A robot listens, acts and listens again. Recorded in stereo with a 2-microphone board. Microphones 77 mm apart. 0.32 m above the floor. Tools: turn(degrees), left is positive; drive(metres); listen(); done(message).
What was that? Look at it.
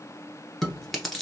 turn(degrees=30)
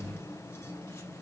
listen()
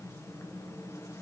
listen()
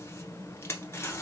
turn(degrees=150)
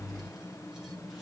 listen()
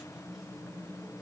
listen()
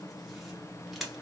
done("Facing the chewing, 1 to 2 m away.")